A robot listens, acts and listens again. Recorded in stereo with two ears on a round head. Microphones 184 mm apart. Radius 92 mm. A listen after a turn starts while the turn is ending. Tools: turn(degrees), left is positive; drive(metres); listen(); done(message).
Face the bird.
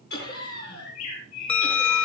turn(degrees=90)
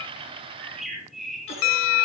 done("Found it: a bird, straight ahead, over 4 m away.")